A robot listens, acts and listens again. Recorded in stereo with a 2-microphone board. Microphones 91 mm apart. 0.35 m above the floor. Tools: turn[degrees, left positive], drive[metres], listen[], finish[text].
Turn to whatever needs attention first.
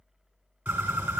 Action: listen[]
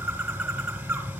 Action: listen[]
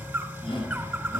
Thought: The shout: about 70° left or 110° left.
Action: turn[70]
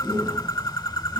Action: finish[Found it: a shout, straight ahead.]